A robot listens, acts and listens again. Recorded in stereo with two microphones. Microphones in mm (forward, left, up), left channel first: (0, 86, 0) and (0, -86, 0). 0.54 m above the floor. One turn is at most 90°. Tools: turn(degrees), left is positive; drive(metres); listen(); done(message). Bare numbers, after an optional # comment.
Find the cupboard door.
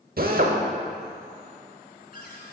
# The cupboard door: about 60° left or 120° left.
turn(60)
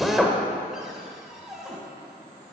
done("Found it: a cupboard door, straight ahead, 1 to 2 m away.")